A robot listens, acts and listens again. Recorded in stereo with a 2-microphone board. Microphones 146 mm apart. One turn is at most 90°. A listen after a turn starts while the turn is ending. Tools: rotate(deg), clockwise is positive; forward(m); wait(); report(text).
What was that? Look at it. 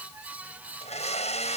rotate(-50)
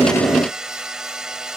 report("Found it: a blender, straight ahead.")